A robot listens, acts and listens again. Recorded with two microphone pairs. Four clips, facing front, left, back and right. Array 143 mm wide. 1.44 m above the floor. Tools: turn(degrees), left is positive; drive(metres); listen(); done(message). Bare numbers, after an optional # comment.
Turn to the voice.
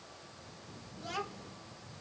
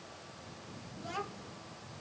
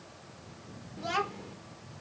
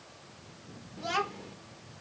# The child speaking: 135° right.
turn(-135)
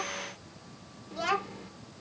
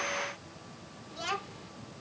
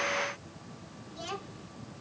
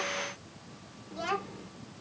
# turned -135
done("Facing the child speaking.")